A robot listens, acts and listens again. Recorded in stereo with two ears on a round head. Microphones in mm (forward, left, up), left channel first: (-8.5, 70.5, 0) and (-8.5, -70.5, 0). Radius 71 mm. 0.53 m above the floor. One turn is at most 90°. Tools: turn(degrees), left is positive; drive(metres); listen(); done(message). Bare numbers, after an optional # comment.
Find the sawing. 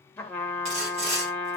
# The sawing: about 40° right or 140° right.
turn(-40)
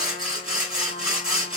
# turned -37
done("Facing the sawing.")